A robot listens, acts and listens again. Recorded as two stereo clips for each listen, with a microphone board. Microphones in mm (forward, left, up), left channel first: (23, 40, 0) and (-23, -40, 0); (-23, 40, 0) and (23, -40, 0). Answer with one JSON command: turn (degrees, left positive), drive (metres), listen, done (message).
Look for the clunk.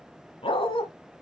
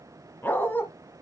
{"listen": true}
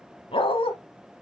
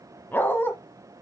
{"listen": true}
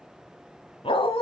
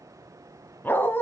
{"done": "I can't make out a clunk, only a dog barking."}